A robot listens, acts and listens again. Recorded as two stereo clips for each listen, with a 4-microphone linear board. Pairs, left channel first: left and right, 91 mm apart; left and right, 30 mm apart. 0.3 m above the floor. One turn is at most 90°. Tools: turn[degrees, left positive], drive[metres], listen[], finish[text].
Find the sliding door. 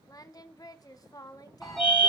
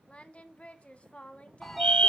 Action: turn[30]
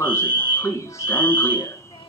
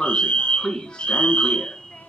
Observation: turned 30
Thought: So it is at 150° left.
Action: turn[90]
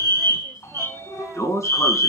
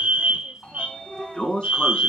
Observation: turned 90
Thought: The sliding door is now 30° left.
Action: turn[30]
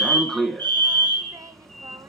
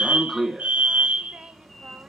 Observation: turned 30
Action: finish[Facing the sliding door.]